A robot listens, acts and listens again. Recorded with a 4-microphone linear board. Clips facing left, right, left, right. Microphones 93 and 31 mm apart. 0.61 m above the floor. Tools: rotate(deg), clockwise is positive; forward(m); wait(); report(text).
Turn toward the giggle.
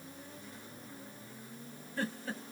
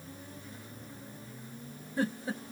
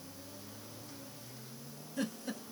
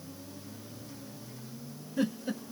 rotate(15)
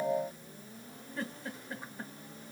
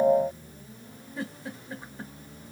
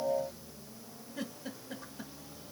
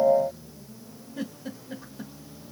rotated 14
report("Facing the giggle.")